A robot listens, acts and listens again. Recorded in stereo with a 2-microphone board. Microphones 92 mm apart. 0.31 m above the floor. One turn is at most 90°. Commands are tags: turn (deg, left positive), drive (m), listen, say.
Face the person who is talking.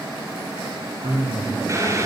<turn deg="-50"/>
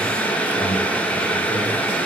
<listen/>
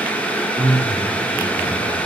<turn deg="-80"/>
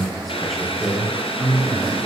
<say>Found it: a man speaking, straight ahead, over 4 m away.</say>